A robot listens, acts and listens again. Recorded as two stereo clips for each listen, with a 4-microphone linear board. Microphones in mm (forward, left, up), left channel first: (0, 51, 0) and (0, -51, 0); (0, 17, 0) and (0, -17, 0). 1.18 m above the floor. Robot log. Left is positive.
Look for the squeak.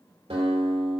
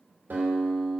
cmd idle
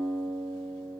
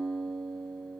cmd idle
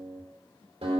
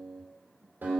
end: I can't make out a squeak, only a guitar.